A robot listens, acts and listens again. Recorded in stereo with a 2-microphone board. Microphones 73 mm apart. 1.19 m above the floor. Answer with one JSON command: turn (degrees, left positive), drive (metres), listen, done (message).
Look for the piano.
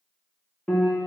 {"turn": 15}
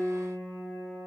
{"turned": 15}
{"done": "Facing the piano."}